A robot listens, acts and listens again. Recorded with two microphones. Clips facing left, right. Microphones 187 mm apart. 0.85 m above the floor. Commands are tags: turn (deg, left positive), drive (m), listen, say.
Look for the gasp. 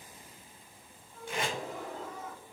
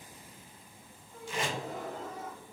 <turn deg="-55"/>
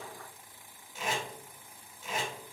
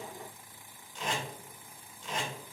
<listen/>
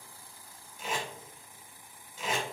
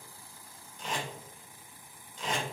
<say>I heard a gasp, but can't make it out now. It was about straight ahead or 70° right.</say>